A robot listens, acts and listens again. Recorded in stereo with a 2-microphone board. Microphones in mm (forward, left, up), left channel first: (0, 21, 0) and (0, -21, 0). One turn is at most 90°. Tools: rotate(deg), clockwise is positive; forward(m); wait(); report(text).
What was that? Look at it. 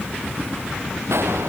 rotate(75)
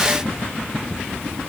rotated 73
wait()
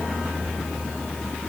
report("I heard a gunshot, but can't make it out now. It was about straight ahead or 35° right.")